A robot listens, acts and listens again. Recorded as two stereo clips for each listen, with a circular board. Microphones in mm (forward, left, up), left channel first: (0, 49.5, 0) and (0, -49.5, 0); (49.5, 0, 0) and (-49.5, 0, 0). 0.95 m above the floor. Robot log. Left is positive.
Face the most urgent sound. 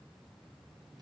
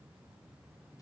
cmd idle
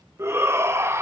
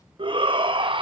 note: The shout: 155° right.
cmd yaw -155
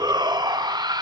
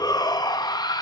note: The shout is now 45° right.
cmd yaw -45
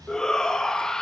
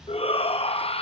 end: Found it: a shout, straight ahead.